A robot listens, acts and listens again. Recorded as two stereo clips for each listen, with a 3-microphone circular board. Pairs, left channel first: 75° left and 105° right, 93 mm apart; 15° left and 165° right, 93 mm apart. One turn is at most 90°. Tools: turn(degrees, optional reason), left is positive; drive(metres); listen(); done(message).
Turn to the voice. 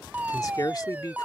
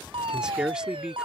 turn(degrees=90, reason="The man speaking: 115° left.")
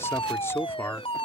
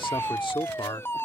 turn(degrees=15, reason="The man speaking is now 15° left.")
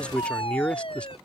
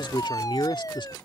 done("Facing the man speaking.")